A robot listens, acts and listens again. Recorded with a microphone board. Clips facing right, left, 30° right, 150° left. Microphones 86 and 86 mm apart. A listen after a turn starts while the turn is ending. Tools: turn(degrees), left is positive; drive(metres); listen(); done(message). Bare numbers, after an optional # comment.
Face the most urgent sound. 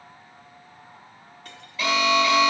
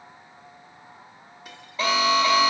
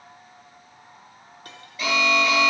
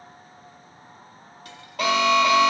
# The alarm: 145° left.
turn(145)
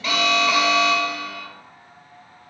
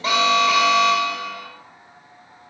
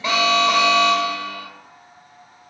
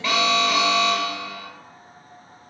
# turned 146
done("Facing the alarm, 1 to 2 m away.")